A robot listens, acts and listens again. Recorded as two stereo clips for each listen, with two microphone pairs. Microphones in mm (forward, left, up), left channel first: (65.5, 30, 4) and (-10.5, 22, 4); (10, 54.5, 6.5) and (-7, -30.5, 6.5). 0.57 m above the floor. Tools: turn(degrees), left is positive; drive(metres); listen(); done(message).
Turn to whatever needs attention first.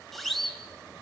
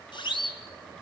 turn(degrees=95)
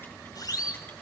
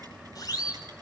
turn(degrees=40)
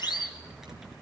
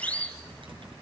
done("Found it: a siren, straight ahead.")